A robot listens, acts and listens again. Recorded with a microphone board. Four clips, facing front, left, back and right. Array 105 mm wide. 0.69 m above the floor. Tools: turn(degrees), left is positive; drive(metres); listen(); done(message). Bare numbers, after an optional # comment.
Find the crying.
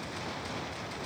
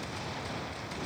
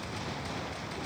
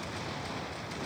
listen()
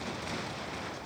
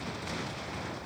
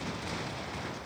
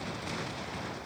listen()
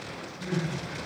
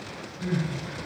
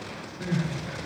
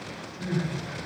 # The crying: 170° right.
turn(-170)
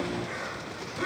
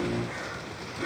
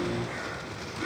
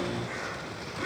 listen()
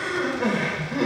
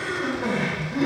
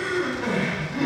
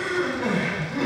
# The crying is now 15° right.
turn(-15)
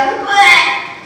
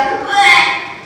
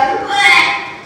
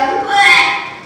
done("Found it: crying, straight ahead, 2 to 4 m away.")